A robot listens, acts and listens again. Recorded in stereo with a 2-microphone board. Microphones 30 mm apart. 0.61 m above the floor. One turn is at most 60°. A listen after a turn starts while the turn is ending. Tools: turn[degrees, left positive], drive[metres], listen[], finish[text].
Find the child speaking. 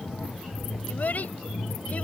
Thought: The child speaking: about 60° left or 120° left.
Action: turn[60]
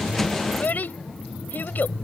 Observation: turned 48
Thought: So it is at 75° left.
Action: turn[60]
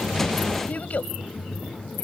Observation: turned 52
Thought: The child speaking is now 55° left.
Action: turn[55]
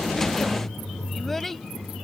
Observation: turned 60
Action: finish[Facing the child speaking.]